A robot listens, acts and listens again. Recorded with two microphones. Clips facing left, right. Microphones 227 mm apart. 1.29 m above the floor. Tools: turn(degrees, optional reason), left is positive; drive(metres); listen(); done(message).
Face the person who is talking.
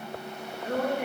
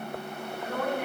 turn(degrees=50, reason="The woman speaking: about 50° left or 130° left.")
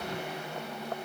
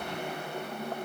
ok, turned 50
listen()
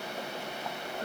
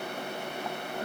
done("Facing the woman speaking.")